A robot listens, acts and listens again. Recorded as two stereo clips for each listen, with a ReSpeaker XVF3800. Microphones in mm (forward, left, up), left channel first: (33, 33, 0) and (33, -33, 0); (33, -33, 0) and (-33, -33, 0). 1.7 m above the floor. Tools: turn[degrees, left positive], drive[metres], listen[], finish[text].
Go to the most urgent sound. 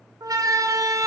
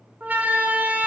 Thought: The siren: 115° right.
Action: turn[-115]
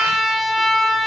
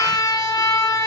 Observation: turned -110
Action: drive[1.0]
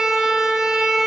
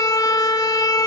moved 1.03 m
Thought: The siren is now 10° right.
Action: turn[-10]
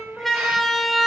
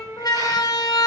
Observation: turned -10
Action: drive[1.0]
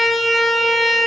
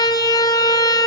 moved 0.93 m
Action: drive[1.0]
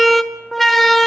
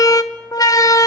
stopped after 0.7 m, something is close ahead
Action: finish[Arrived at the siren, straight ahead.]